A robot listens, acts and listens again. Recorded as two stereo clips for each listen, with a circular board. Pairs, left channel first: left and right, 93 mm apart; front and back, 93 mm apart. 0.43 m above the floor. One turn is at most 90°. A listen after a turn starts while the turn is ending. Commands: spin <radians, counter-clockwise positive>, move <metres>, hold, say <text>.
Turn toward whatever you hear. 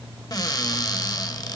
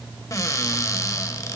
spin 0.87
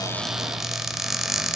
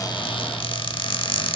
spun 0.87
say Facing the cupboard door, under 1 m away.